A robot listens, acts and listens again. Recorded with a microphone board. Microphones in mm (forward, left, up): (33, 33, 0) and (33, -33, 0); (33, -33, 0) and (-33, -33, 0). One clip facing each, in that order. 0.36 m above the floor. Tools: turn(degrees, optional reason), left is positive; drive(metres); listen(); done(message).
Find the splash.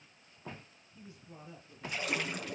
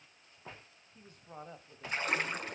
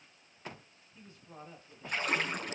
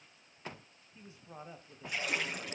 turn(degrees=-40, reason="The splash: 40° right.")
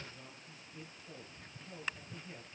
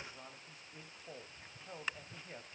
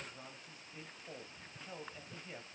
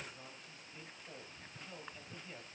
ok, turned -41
done("Facing where the splash came from. I can't hear it now.")